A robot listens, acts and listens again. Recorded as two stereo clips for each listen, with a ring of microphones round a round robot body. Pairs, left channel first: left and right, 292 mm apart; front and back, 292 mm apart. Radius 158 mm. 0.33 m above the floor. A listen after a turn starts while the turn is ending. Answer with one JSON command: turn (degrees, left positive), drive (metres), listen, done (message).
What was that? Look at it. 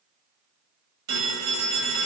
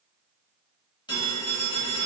{"turn": -75}
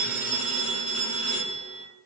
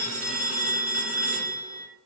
{"turn": -20}
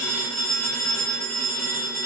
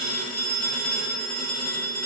{"done": "Found it: a phone ringing, straight ahead."}